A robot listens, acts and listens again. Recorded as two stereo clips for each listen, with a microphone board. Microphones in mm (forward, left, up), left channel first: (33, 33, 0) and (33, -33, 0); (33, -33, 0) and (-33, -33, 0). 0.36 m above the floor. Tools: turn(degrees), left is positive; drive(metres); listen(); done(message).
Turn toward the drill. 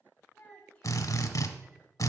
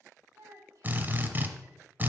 turn(degrees=120)
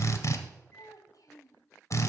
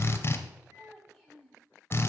turn(degrees=50)
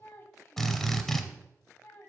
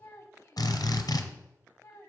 done("Found it: a drill, straight ahead.")